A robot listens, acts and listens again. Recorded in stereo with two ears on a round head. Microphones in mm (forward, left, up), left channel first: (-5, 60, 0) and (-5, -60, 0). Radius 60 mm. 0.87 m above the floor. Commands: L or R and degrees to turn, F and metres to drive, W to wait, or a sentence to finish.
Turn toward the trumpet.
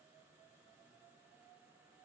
W
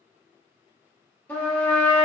L30
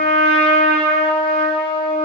L135
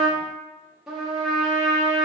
Found it: a trumpet, straight ahead, under 1 m away.